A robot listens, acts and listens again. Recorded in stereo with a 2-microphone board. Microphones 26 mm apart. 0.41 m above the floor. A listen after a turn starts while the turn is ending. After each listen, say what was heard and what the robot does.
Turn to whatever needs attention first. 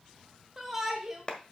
Turn 30° right.
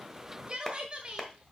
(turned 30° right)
So it is at 140° right. Turn 140° right.
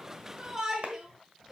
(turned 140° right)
The shout is now 25° right. Turn 25° right.
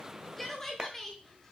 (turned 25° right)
The shout is now 15° left. Turn 15° left.
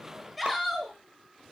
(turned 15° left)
Found it: a shout, straight ahead.